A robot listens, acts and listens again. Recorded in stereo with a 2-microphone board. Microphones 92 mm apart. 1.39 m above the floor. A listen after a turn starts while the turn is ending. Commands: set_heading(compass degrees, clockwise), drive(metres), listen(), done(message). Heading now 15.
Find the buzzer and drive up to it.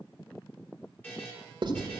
set_heading(0)
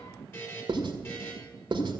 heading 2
set_heading(212)
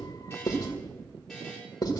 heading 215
drive(1.0)
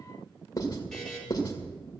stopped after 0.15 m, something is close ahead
done("Something is in my way. I am facing the buzzer but have not reached it.")